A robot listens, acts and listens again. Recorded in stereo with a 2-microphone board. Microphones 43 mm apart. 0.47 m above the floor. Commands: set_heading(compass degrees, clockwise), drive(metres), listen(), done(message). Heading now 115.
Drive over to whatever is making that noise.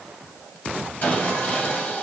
set_heading(75)
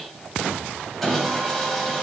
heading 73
drive(1.0)
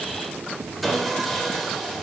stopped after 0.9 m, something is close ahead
done("Arrived at the sawing, straight ahead.")